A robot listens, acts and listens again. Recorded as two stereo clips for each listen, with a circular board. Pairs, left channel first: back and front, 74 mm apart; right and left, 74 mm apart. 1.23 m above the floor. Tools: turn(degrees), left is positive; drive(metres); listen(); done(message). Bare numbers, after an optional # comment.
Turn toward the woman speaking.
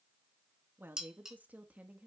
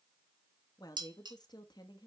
# The woman speaking: 75° right.
turn(-75)
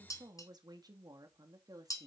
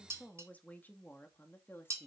# The woman speaking is now 30° right.
turn(-30)
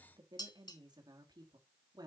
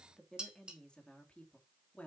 # The woman speaking is now 15° right.
turn(-15)
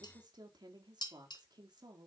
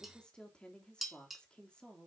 # The woman speaking is now 10° right.
turn(-10)
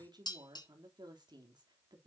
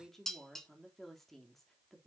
done("Found it: a woman speaking, straight ahead.")